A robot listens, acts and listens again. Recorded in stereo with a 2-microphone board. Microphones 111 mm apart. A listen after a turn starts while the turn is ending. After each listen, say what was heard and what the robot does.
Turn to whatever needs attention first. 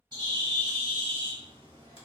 Keep listening.
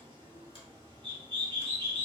Keep listening.
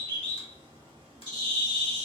I can't make out anything urgent to turn to.